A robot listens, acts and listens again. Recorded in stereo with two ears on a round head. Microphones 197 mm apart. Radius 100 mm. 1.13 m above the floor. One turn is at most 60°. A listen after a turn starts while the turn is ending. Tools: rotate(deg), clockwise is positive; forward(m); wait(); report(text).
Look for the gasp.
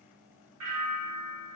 wait()
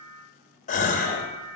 rotate(-35)
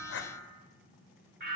wait()
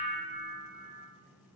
report("I heard a gasp, but can't make it out now. It was about straight ahead or 110° left.")